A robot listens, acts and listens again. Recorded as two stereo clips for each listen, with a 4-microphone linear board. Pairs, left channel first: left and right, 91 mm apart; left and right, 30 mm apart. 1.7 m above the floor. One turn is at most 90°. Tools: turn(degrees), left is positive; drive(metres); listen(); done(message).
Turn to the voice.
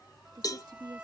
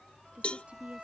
turn(degrees=-55)
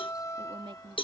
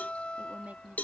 turn(degrees=-70)
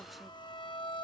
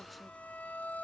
listen()
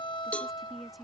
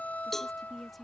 done("Found it: a woman speaking, straight ahead.")